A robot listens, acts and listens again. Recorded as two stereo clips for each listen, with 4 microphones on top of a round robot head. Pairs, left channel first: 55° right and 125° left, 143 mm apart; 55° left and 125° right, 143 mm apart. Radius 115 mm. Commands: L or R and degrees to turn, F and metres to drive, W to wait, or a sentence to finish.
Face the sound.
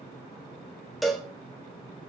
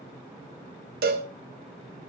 R145
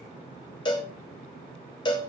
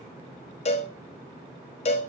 Found it: a cowbell, straight ahead, 1 to 2 m away.